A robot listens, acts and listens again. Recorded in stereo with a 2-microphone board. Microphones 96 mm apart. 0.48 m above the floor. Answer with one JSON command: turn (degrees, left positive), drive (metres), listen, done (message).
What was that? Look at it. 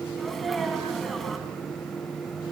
{"turn": 30}
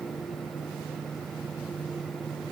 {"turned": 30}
{"listen": true}
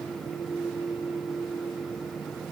{"done": "I heard a sneeze, but can't make it out now. It was about 30° right or 150° left."}